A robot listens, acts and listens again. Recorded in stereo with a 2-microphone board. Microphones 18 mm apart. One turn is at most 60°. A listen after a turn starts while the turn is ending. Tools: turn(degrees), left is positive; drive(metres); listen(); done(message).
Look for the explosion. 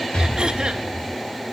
turn(degrees=60)
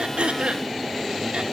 turn(degrees=30)
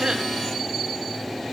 done("I heard an explosion from this way, but can't make it out now.")